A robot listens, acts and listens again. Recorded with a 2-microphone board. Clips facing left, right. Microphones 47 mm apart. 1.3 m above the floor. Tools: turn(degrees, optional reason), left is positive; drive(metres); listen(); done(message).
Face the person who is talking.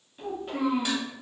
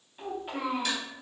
turn(degrees=-30)
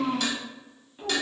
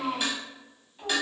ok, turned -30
turn(degrees=20, reason="So it is at 20° left.")
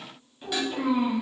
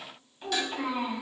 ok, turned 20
done("Facing the child speaking.")